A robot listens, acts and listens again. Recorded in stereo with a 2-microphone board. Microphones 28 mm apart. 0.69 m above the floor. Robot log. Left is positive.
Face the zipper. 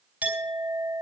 cmd idle
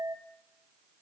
cmd idle
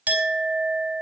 end: I can't make out a zipper, only a clink.